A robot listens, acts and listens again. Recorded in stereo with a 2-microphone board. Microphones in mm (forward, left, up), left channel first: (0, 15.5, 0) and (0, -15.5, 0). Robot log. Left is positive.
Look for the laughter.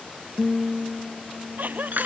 note: The laughter: about 65° right or 115° right.
cmd yaw -65
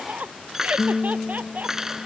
note: So it is at 55° right.
cmd yaw -55
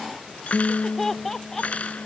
note: The laughter is now 10° left.
cmd yaw +10
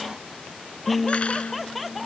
end: Facing the laughter.